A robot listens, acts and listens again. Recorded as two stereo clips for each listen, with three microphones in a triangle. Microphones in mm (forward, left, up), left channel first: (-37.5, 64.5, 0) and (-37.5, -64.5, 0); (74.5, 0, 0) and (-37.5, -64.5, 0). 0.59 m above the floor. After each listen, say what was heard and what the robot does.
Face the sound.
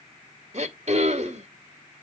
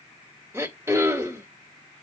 The throat clearing: 85° right. Turn 85° right.
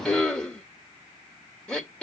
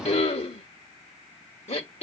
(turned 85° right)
Found it: throat clearing, straight ahead, 1 to 2 m away.